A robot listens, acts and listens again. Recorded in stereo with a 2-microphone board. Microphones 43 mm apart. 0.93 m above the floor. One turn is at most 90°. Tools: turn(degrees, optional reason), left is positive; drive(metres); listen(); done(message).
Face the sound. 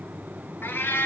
turn(degrees=60, reason="The cat meowing: about 60° left or 120° left.")
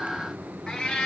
turn(degrees=20, reason="So it is at 20° left.")
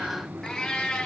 turn(degrees=20, reason="The cat meowing is now 20° left.")
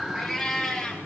done("Facing the cat meowing, 2 to 4 m away.")